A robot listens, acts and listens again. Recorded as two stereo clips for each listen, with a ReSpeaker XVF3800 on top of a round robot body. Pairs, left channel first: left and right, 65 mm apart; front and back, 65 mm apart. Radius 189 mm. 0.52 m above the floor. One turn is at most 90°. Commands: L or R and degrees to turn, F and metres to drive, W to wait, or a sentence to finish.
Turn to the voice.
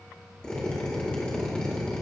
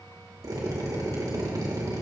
W
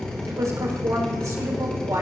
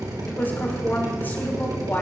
R60
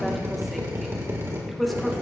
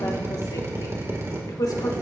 Found it: a woman speaking, straight ahead.